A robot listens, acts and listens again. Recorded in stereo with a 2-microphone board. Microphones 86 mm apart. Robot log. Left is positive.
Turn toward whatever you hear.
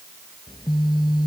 note: The phone buzzing: about 55° left or 125° left.
cmd yaw +55
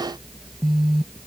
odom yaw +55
end: Facing the phone buzzing.